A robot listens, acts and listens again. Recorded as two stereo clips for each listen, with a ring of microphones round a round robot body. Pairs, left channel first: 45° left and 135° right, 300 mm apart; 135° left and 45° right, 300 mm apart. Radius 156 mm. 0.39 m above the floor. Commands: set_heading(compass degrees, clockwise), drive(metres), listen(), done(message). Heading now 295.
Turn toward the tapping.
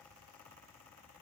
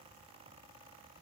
listen()
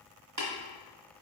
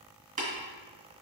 set_heading(45)
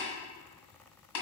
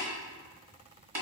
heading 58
set_heading(43)
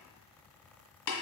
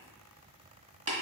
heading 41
done("Facing the tapping, 1 to 2 m away.")